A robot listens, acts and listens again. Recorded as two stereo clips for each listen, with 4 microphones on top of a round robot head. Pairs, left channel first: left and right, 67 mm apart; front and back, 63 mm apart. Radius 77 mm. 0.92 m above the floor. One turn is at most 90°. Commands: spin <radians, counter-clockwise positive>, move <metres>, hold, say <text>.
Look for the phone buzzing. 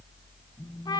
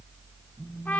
spin 1.57
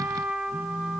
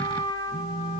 spin 0.52
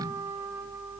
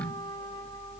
hold
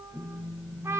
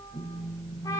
say Found it: a phone buzzing, straight ahead.